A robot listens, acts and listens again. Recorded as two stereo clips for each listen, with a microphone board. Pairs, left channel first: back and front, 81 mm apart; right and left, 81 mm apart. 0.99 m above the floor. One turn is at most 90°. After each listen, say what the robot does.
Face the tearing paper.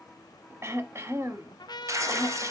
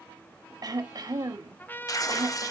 Turn 50° right.
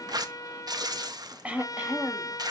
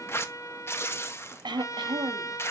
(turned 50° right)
Turn 30° right.
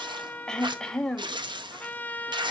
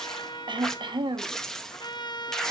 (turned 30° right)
Facing the tearing paper, under 1 m away.